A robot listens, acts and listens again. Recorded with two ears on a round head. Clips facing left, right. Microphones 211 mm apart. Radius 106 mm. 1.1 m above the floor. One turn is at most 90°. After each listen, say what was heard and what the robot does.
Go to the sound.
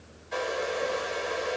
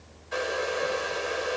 Turn 30° right.
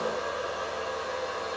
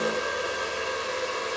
So it is at 145° right. Turn 90° right.
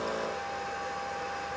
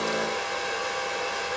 The hair dryer is now 85° right. Turn 85° right.
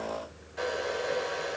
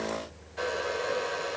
Drive 1.0 m forward.
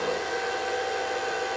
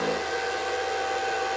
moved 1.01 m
Drive 1.0 m forward.
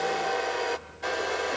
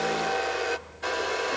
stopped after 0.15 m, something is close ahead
Arrived at the hair dryer, straight ahead.